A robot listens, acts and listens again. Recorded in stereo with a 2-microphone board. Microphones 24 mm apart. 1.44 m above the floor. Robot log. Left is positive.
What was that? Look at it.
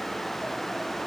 cmd idle
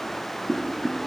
cmd yaw -30
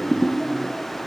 note: So it is at 20° left.
cmd yaw +20
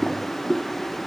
end: Facing the boiling, under 1 m away.